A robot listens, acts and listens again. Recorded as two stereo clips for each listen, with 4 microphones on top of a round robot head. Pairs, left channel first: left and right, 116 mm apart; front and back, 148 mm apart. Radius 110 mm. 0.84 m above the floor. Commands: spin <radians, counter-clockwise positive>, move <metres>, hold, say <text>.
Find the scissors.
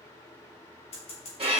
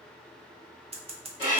spin 2.27
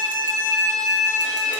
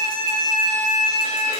hold
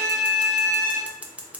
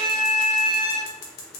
spin -0.17
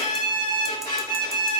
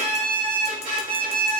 hold
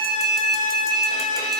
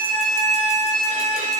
hold
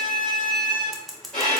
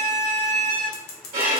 say Found it: scissors, straight ahead, under 1 m away.